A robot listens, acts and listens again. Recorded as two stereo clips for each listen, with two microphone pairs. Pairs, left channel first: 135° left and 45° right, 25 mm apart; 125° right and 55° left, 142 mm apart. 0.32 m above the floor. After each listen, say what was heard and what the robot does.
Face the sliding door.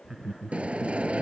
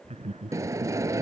The sliding door: 15° right. Turn 15° right.
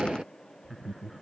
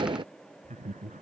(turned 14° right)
Facing the sliding door.